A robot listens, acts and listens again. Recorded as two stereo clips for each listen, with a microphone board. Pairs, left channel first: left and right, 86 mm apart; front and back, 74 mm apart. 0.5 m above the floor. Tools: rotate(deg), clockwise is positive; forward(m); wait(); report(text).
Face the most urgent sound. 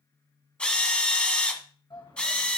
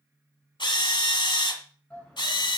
rotate(-70)
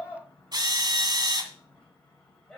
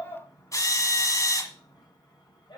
rotate(-10)
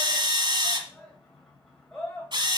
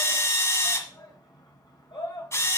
report("Found it: a shout, straight ahead.")